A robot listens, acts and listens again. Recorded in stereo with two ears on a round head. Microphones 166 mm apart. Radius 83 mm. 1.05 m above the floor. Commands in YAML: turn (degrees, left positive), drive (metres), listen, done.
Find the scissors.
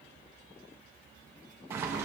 listen: true
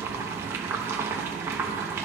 listen: true
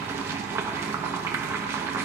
done: "I can't make out scissors to turn to."